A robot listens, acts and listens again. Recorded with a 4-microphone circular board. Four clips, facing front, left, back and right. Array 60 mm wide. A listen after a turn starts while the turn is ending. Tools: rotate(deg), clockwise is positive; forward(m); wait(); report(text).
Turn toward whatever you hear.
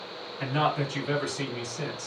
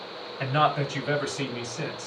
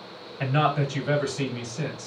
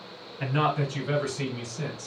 rotate(-110)
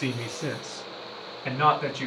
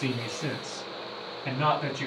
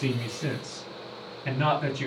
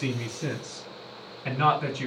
rotate(25)
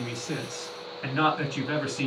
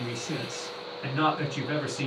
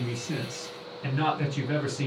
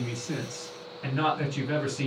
rotate(-15)
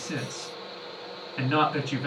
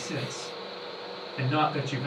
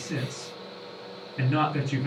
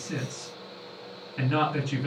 report("Found it: a man speaking, straight ahead, over 4 m away.")